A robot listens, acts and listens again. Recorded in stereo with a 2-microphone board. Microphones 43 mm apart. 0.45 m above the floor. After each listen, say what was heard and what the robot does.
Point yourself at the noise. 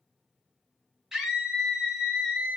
Turn 30° right.
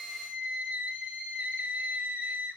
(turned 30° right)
So it is at 135° right. Turn 135° right.
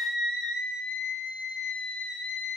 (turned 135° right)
Found it: a scream, straight ahead.